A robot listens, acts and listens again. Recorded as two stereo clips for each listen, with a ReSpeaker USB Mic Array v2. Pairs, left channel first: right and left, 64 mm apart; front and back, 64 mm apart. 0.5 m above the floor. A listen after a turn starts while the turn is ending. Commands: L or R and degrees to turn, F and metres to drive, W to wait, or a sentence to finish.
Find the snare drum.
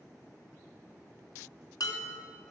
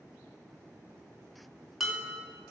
W
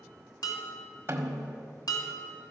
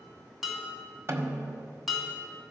L140
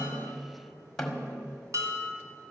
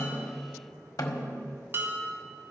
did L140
Facing the snare drum.